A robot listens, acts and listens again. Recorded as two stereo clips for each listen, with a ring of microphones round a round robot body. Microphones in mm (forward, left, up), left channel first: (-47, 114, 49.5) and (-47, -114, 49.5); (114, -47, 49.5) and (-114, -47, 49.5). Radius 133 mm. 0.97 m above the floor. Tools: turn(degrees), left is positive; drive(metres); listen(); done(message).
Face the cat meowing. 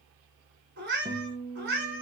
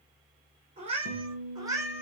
turn(degrees=-100)
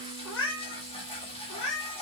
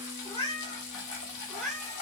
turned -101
turn(degrees=85)
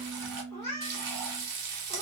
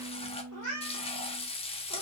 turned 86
turn(degrees=10)
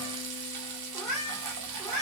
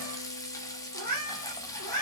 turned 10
done("Found it: a cat meowing, straight ahead, 2 to 4 m away.")